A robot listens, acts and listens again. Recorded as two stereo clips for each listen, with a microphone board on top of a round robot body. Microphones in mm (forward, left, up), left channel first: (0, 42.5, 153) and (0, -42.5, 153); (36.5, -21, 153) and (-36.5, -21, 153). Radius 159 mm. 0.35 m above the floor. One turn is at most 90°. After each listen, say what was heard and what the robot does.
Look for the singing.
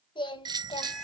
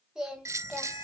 The singing: 95° left. Turn 90° left.
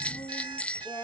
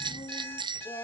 The singing is now 25° left. Turn 25° left.
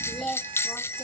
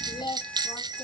The singing is now 10° left. Turn 10° left.
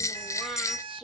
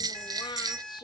Found it: singing, straight ahead.